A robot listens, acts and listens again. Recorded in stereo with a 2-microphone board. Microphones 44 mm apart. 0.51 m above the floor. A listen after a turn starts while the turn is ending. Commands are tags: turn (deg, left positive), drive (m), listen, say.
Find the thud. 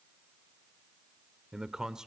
<listen/>
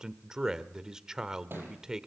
<turn deg="-55"/>
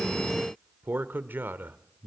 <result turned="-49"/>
<listen/>
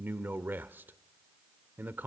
<say>I heard a thud, but can't make it out now. It was about 10° right or 75° right.</say>